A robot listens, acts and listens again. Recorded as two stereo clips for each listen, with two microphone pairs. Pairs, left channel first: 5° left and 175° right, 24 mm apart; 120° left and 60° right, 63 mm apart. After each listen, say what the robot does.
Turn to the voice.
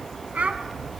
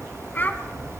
Turn 180° left.
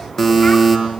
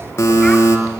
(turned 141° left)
Turn 40° left.
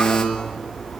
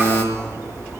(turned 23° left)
Turn 20° left.
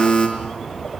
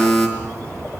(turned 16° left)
I heard a child speaking from this way, but can't make it out now.